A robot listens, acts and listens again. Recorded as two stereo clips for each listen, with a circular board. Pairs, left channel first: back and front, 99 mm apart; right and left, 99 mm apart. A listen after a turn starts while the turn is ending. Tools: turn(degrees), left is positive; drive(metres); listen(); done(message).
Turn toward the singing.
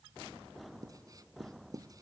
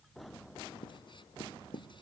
listen()
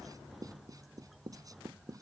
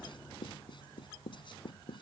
listen()
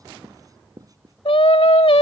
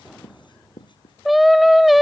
turn(degrees=180)
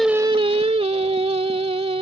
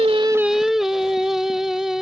done("Facing the singing.")